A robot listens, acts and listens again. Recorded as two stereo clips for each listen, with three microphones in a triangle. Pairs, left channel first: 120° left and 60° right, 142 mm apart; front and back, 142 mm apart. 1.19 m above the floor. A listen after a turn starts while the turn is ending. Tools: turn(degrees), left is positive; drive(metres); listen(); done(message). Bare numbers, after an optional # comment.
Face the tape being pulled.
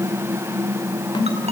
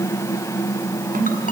listen()
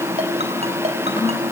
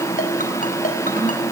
listen()
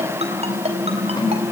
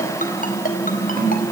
done("I can't make out tape being pulled, only a snare drum and a ringtone.")